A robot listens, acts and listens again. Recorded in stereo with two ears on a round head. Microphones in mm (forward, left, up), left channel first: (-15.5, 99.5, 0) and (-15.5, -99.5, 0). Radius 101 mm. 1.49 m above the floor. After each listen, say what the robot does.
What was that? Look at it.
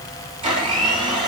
Turn 25° right.
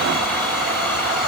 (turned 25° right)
Facing the blender, over 4 m away.